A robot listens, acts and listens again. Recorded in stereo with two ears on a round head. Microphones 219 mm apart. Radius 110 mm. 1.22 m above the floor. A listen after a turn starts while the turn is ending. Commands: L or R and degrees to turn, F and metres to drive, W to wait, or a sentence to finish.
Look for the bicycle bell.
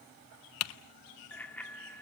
L30
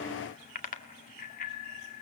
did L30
L145
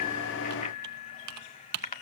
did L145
L30
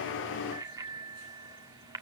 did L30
R15
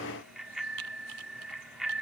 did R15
Found it: a bicycle bell, straight ahead.